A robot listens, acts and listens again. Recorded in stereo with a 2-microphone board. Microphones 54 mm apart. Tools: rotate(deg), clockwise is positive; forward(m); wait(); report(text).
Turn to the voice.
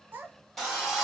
rotate(35)
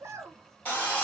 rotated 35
rotate(105)
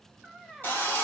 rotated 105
report("Facing the child speaking.")